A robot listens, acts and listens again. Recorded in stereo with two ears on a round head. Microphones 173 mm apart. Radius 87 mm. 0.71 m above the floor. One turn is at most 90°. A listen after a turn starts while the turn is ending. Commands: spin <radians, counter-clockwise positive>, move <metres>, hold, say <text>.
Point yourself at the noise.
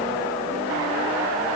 hold
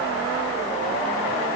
hold
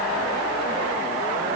say I can't make out anything.